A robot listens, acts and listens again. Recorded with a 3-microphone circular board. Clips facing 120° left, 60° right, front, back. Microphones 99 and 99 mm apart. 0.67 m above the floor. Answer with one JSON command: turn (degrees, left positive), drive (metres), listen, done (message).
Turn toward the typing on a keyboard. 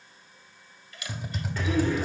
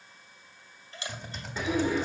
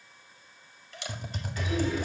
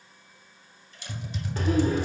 {"turn": 40}
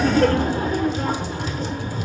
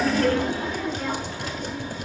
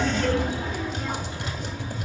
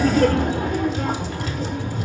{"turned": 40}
{"turn": -25}
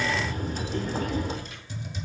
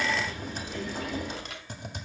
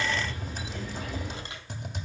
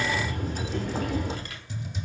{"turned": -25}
{"turn": -25}
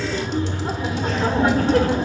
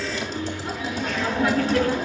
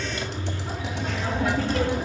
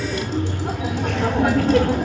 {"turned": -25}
{"listen": true}
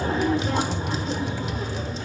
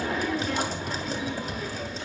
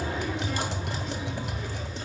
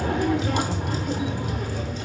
{"turn": -10}
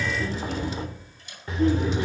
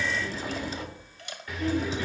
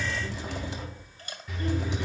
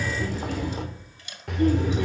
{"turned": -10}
{"listen": true}
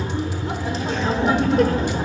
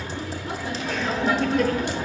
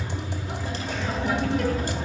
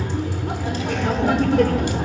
{"turn": -10}
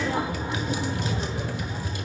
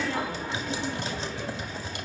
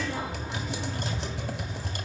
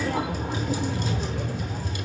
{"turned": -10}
{"done": "Facing the typing on a keyboard, 1 to 2 m away."}